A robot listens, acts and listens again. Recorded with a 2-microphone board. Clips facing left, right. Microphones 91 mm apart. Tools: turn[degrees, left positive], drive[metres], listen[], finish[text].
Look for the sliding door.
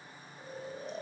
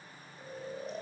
Action: listen[]
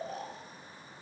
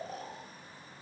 Action: listen[]
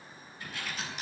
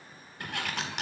Thought: The sliding door: about 70° right or 110° right.
Action: turn[-70]
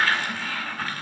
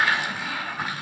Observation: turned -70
Thought: So it is at 15° right.
Action: turn[-15]
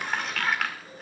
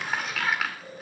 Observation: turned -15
Action: finish[Facing the sliding door.]